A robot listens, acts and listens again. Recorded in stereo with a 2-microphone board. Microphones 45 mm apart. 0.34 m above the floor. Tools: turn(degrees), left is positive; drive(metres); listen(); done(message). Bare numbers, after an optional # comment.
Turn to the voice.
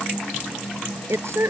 turn(-90)
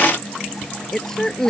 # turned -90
# So it is at 15° left.
turn(15)
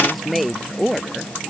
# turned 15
done("Facing the woman speaking.")